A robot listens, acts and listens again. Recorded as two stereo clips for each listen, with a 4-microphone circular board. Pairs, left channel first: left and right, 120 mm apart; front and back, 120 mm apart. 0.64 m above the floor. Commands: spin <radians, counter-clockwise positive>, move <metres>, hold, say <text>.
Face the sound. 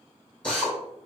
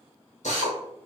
spin 0.17
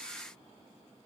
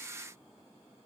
hold
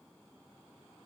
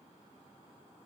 hold
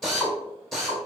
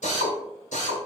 say Facing the drill, 1 to 2 m away.